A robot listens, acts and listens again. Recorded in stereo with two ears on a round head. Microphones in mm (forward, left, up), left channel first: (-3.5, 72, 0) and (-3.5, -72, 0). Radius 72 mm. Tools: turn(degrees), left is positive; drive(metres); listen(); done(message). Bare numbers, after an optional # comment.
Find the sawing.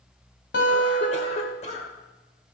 listen()
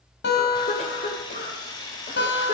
# The sawing: about 30° left or 150° left.
turn(30)
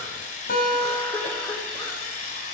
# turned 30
# So it is at 120° left.
turn(120)
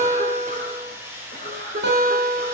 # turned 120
# The sawing is now 15° right.
turn(-15)
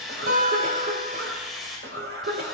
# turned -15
done("Facing the sawing.")